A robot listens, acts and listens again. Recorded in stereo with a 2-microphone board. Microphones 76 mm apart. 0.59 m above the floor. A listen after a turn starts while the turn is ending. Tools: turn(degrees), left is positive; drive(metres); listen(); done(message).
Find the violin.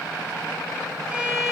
turn(degrees=-30)
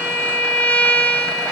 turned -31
turn(degrees=20)
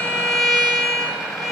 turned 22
done("Found it: a violin, straight ahead.")